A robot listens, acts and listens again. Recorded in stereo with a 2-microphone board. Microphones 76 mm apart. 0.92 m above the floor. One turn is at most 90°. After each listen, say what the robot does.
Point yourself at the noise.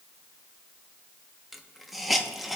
Turn 30° left.
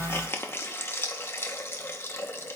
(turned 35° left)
Turn 90° left.
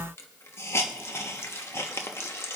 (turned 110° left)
Turn 35° left.
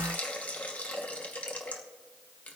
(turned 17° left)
Turn 20° left.
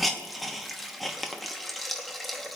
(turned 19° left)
Facing the hiss, 1 to 2 m away.